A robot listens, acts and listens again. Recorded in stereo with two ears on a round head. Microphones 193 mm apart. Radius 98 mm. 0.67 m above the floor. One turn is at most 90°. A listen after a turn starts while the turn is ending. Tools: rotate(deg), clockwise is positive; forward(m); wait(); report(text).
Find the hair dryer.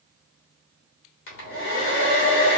rotate(-65)
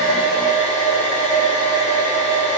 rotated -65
rotate(-40)
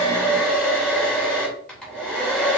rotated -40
report("Facing the hair dryer.")